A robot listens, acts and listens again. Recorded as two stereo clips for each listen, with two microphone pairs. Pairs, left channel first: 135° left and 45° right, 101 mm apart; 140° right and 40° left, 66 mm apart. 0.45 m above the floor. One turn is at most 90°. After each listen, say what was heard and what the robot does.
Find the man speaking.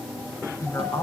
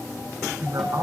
The man speaking: 70° left. Turn 70° left.
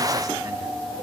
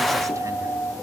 Keep listening.
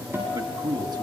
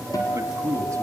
Facing the man speaking.